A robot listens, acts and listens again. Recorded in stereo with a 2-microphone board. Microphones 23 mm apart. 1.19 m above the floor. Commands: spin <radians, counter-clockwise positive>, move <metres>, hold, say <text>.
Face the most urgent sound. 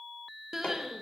spin -0.35
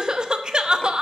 spin -2.44
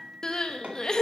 spin 0.61
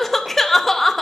spin 0.26
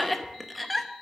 say Facing the crying, under 1 m away.